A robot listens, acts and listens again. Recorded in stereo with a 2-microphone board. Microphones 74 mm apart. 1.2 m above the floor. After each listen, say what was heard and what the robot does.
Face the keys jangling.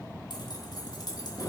The keys jangling: about 60° left or 120° left. Turn 60° left.
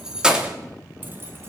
So it is at 15° right. Turn 15° right.
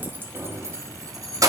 The keys jangling is now 55° right. Turn 55° right.
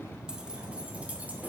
Keep listening.
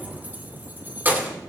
The keys jangling is now 25° right. Turn 25° right.
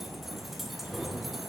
Found it: keys jangling, straight ahead.